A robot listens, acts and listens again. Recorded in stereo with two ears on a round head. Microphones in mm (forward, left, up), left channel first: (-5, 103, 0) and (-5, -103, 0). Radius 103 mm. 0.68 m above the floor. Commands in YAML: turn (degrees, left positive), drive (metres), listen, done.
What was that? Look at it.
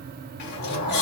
turn: 45
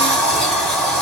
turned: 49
done: "Facing the sliding door, under 1 m away."